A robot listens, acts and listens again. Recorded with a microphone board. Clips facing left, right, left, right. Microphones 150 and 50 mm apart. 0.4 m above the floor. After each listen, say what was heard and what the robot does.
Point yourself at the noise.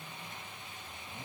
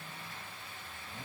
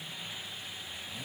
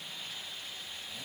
Keep listening.
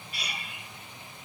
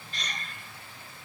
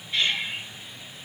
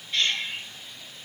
Turn 30° left.
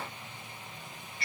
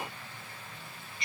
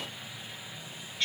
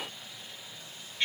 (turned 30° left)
So it is at 20° right. Turn 20° right.
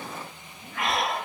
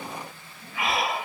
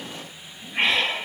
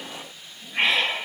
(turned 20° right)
Facing the breathing.